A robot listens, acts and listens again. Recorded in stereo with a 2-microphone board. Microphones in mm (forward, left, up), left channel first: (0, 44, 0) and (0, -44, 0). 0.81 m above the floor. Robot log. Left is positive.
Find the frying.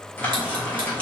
note: The frying: about 15° left or 165° left.
cmd yaw +15
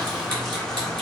end: Facing the frying.